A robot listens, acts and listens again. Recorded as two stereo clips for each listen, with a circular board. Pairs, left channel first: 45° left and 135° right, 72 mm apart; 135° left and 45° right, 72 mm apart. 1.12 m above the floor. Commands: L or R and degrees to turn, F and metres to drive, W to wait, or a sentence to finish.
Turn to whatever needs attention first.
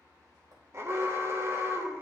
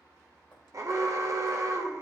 R85
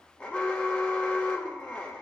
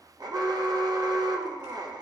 R25
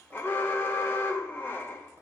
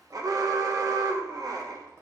R15
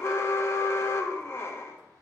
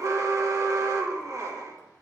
Facing the alarm, under 1 m away.